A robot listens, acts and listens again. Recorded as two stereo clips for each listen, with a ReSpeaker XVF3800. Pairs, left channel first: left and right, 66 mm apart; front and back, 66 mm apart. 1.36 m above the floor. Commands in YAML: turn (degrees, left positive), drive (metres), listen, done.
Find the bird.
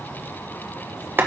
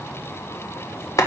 listen: true
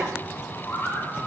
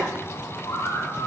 turn: 30
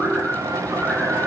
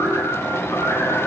listen: true
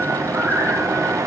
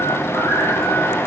turn: 10
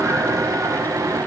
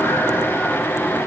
listen: true
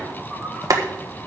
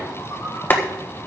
listen: true
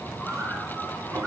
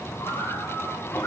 done: "Facing where the bird came from. I can't hear it now."